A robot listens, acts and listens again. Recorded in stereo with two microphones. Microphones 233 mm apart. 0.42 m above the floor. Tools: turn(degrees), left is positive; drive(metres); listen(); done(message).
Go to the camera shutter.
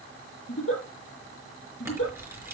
turn(degrees=-30)
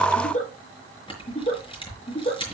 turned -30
turn(degrees=20)
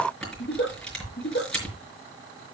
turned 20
drive(metres=1.0)
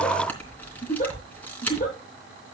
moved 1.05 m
drive(metres=1.0)
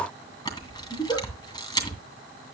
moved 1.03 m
turn(degrees=15)
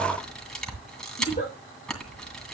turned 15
drive(metres=1.0)
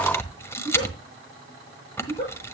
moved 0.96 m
turn(degrees=10)
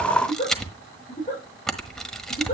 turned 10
drive(metres=1.0)
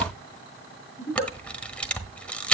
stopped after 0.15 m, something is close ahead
done("I am next to the camera shutter.")